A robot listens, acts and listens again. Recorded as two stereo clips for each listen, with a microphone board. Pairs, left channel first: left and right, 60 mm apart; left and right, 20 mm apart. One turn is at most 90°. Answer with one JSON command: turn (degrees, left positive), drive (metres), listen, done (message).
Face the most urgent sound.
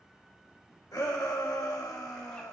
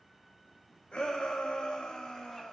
{"turn": 90}
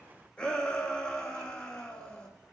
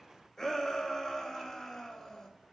{"turn": 15}
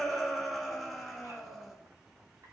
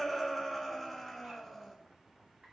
{"done": "Found it: a shout, straight ahead, 1 to 2 m away."}